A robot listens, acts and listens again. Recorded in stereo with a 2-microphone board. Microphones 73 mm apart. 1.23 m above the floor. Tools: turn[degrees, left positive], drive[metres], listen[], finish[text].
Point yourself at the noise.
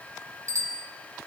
Thought: The bicycle bell: about 45° right or 135° right.
Action: turn[-45]
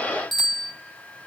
Action: finish[Facing the bicycle bell, over 4 m away.]